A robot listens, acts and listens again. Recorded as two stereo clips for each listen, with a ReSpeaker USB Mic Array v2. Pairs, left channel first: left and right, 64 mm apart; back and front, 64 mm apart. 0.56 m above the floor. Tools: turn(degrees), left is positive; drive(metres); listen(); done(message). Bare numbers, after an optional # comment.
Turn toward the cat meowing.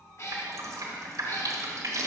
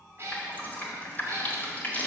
# The cat meowing: 50° left.
turn(50)
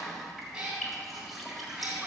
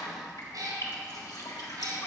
# The cat meowing is now 10° right.
turn(-10)
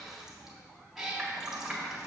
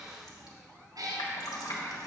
done("Facing the cat meowing.")